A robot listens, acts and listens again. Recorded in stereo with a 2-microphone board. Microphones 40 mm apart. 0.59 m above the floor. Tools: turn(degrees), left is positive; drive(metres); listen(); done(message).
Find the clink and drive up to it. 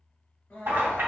turn(degrees=-90)
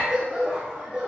listen()
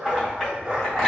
turn(degrees=10)
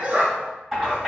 drive(metres=1.0)
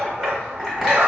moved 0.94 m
drive(metres=1.0)
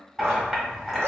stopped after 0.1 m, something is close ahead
done("I am next to the clink.")